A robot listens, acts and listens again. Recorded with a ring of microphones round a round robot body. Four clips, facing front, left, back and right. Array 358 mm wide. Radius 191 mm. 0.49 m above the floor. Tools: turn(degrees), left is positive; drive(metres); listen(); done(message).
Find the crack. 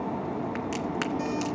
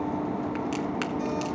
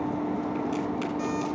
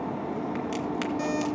turn(degrees=10)
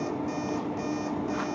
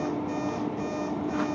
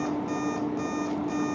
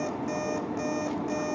done("Facing where the crack came from. I can't hear it now.")